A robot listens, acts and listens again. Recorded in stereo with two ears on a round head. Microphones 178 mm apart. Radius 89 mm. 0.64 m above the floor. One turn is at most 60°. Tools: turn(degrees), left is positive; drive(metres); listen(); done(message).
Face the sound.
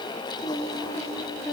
turn(degrees=30)
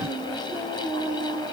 turn(degrees=-25)
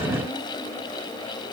listen()
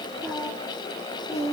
done("Facing the singing, over 4 m away.")